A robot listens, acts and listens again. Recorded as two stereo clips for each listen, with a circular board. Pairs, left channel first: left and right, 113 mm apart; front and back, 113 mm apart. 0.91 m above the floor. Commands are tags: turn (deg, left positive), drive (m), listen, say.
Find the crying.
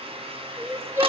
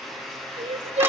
<turn deg="-155"/>
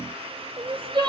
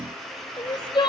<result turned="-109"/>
<turn deg="-45"/>
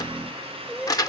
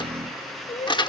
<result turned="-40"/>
<say>Facing the crying.</say>